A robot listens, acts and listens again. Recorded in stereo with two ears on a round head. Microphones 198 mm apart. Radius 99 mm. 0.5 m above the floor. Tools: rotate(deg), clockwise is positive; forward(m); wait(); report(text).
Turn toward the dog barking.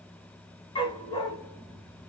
rotate(-20)
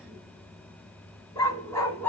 rotate(-30)
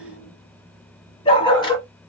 rotate(-20)
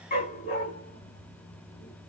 rotate(-145)
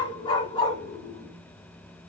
rotate(-20)
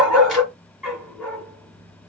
report("Facing the dog barking.")